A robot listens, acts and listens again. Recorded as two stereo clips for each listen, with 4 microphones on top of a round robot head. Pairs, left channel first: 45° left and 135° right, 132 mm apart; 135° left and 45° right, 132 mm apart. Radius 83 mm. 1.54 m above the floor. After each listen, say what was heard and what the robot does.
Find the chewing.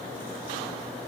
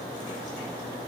Keep listening.
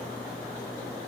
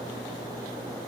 Keep listening.
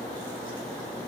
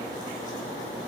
I can't make out chewing to turn to.